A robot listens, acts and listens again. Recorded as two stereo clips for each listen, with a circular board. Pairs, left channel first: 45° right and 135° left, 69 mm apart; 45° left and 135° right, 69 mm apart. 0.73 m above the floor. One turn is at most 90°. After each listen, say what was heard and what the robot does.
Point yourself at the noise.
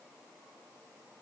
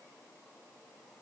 Keep listening.
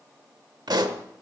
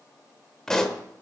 The pop: 125° left. Turn 90° left.
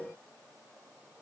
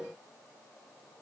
Nothing new. It was at 35° left. Turn 35° left.
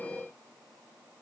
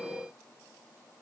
I heard a pop from this way, but can't make it out now.